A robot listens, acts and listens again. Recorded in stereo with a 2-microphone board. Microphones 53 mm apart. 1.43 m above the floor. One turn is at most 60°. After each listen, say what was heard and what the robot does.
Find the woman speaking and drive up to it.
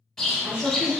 The woman speaking: about 20° right or 160° right. Turn 20° right.
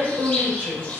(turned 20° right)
So it is at 140° right. Turn 60° right.
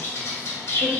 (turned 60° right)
Nothing new. It was at 80° right. Turn 60° right.
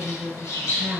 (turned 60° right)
The woman speaking is now 70° right. Turn 60° right.
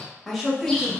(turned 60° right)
Drive 1.0 m forward.
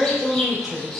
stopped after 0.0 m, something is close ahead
Blocked. The woman speaking is further on, straight ahead.